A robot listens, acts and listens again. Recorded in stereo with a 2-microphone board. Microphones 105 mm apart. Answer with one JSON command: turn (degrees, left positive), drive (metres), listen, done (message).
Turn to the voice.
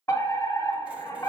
{"listen": true}
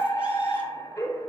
{"listen": true}
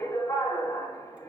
{"done": "I can't make out anyone speaking to turn to."}